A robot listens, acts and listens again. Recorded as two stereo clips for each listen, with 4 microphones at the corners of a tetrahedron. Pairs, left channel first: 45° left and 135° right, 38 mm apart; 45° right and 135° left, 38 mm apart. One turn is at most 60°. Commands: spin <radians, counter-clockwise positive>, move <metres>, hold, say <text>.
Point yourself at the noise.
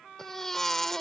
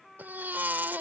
spin 1.05
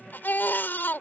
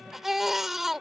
spin 0.96
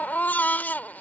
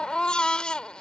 spin 0.26
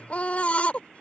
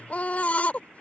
say Facing the baby crying.